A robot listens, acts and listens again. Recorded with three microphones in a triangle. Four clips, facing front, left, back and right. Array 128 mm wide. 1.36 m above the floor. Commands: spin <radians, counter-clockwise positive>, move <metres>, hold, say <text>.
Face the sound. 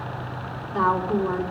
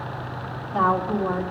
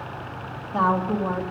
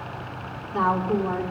spin 2.79
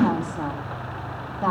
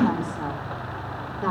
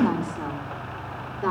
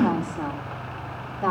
say Found it: a woman speaking, straight ahead.